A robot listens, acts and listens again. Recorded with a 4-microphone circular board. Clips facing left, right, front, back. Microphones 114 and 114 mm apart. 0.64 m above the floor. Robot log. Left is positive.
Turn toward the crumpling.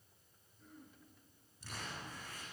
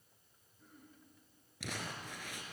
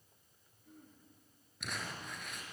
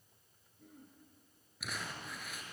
note: The crumpling: 90° right.
cmd yaw -90
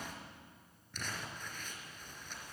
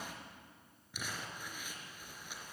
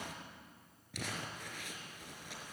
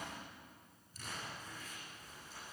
note: The crumpling is now 10° right.
cmd yaw -10
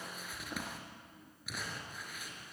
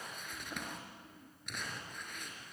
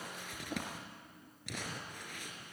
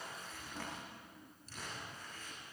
end: Found it: crumpling, straight ahead, over 4 m away.